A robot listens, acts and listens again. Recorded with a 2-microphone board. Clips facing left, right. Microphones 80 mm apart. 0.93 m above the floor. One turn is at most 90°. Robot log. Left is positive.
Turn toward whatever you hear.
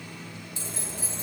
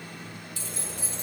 note: The keys jangling: about 25° left or 155° left.
cmd yaw +25
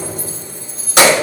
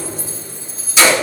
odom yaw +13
note: So it is at 115° left.
cmd yaw +90
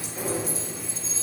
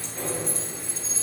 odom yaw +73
end: Found it: keys jangling, straight ahead.